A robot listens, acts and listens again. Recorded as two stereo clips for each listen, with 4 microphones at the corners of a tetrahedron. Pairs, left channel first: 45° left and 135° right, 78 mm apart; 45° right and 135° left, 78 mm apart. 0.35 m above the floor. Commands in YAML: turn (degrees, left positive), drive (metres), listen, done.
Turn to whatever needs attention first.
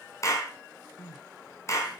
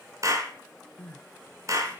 turn: 25
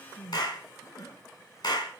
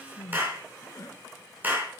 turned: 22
done: "Facing the crying."